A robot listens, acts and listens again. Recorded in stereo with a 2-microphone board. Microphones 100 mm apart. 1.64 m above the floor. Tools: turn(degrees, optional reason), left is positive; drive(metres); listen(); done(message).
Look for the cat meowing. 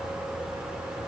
listen()
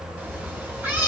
turn(degrees=-20, reason="The cat meowing: about 20° right or 160° right.")
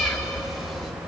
done("Found it: a cat meowing, straight ahead, 1 to 2 m away.")